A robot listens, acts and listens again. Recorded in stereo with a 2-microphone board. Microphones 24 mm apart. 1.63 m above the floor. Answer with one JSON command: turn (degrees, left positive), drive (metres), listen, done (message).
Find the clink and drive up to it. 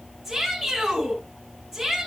{"listen": true}
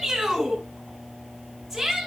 {"listen": true}
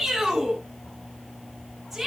{"done": "I can't make out a clink, only a shout."}